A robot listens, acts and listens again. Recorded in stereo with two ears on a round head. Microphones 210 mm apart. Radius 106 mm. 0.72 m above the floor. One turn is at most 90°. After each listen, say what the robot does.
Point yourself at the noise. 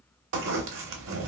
Turn 60° right.
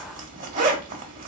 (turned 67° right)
Turn 40° right.
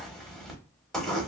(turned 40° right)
Facing the zipper.